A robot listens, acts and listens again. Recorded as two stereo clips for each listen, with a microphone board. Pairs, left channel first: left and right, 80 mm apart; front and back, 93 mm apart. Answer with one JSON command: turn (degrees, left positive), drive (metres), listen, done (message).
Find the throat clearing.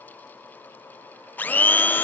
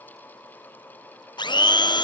{"listen": true}
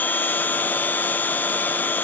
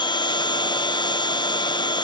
{"listen": true}
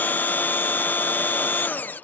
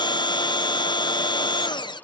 {"done": "I can't make out throat clearing, only a blender."}